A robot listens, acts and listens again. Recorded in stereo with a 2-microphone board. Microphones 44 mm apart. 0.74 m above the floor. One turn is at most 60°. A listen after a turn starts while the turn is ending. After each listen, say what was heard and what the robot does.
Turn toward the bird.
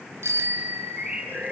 The bird: about 30° right or 150° right. Turn 30° right.
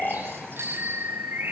So it is at 120° right. Turn 60° right.
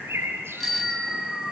The bird is now 60° right. Turn 60° right.
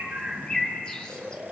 The bird is now 20° left. Turn 20° left.
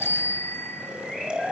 Keep listening.
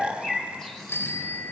The bird is now 10° left. Turn 10° left.
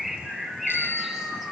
Found it: a bird, straight ahead.